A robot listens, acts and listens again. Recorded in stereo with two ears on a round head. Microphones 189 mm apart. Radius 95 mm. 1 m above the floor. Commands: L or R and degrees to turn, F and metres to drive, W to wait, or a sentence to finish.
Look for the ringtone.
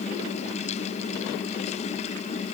W
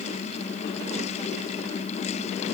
W
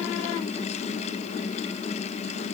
I can't make out a ringtone.